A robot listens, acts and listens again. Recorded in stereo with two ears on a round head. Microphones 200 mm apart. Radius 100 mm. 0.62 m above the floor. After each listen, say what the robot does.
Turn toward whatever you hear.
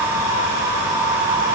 Keep listening.
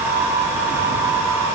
Keep listening.
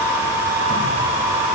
I can't make out anything.